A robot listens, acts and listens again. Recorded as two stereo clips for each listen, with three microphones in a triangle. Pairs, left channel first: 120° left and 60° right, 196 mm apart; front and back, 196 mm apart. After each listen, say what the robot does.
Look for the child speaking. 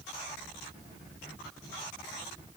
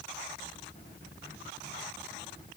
Keep listening.
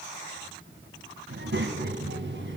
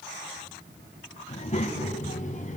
Turn 50° right.
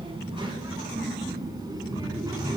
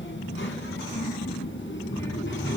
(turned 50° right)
Turn 10° left.
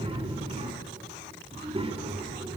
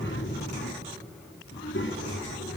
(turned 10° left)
Facing the child speaking, 2 to 4 m away.